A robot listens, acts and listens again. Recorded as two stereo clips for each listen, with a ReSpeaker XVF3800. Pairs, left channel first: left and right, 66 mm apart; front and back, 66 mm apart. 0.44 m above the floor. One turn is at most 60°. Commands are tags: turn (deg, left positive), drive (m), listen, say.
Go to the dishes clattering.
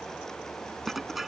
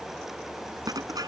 <turn deg="-60"/>
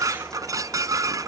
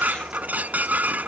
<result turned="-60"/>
<turn deg="-60"/>
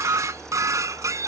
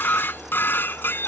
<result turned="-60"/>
<turn deg="-55"/>
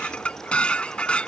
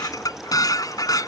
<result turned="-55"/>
<turn deg="15"/>
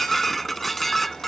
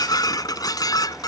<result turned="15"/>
<drive m="1.0"/>
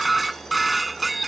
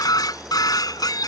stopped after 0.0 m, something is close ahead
<say>Something is in my way. I am facing the dishes clattering but have not reached it.</say>